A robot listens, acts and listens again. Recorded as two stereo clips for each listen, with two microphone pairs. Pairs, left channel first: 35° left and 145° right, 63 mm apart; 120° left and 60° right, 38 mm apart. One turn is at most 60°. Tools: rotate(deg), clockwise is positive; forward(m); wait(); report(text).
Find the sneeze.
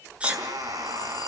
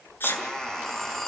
rotate(-60)
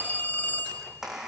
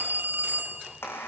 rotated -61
rotate(-60)
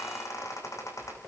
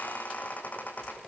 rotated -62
rotate(-20)
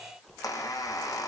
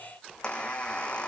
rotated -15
report("I heard a sneeze from this way, but can't make it out now.")